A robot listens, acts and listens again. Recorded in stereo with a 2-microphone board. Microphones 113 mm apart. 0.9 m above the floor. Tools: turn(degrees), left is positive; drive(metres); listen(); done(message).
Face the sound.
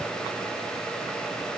listen()
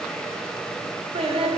turn(degrees=-60)
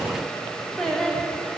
done("Found it: singing, straight ahead.")